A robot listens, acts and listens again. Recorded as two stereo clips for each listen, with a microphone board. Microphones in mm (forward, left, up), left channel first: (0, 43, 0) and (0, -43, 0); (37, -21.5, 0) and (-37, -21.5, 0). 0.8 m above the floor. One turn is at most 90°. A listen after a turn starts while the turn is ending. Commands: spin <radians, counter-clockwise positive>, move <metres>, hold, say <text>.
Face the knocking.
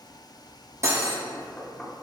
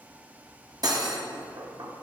spin 1.57
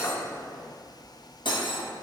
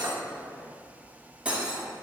spin 1.48
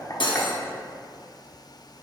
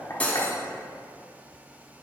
hold
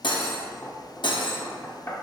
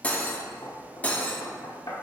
spin 0.52
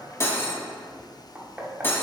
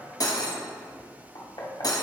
spin -0.26
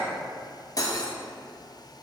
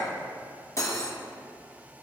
hold
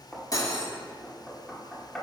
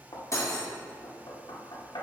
say Found it: knocking, straight ahead.